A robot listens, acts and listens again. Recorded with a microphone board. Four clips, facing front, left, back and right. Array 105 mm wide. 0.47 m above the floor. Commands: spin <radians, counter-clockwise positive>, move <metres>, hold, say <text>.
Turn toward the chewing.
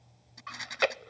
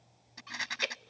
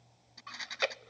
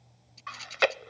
spin -1.22
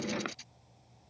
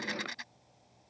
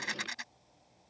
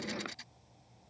hold
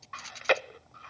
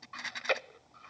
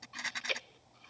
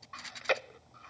say Facing the chewing.